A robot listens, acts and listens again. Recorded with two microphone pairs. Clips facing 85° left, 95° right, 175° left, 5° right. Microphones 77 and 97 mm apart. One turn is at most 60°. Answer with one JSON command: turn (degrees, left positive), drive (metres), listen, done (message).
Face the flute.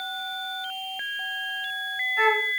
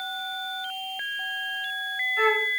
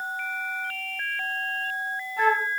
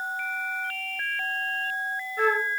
{"turn": 60}
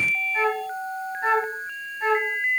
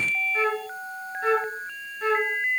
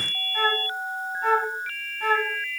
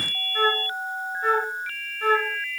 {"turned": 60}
{"turn": 60}
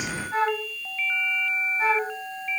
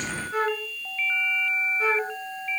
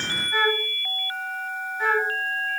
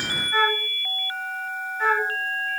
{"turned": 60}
{"turn": 60}
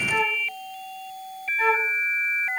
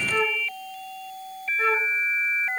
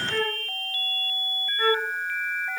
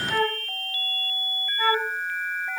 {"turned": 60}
{"turn": 50}
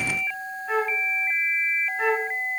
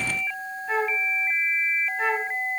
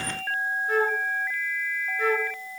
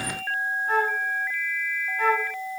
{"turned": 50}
{"done": "Found it: a flute, straight ahead."}